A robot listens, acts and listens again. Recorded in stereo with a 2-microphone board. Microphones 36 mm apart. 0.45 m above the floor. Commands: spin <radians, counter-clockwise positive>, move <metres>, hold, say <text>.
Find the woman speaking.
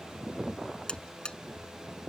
hold
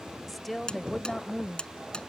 spin 0.26
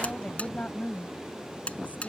spin 2.27
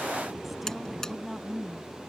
say Facing the woman speaking.